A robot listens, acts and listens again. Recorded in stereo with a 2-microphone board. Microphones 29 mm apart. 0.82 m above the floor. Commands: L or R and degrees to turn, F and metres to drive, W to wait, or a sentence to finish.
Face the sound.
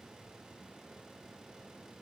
W
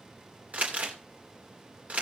R50
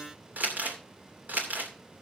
R75
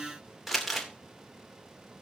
Found it: crumpling, straight ahead, 2 to 4 m away.